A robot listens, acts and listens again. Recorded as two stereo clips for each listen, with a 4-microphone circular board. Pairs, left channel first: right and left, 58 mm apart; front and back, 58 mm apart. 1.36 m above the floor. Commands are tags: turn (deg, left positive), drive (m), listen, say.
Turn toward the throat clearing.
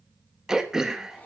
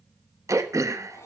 <turn deg="170"/>
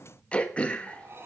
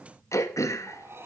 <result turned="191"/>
<turn deg="-20"/>
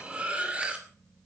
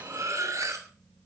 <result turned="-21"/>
<listen/>
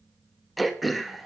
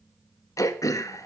<say>Facing the throat clearing, 1 to 2 m away.</say>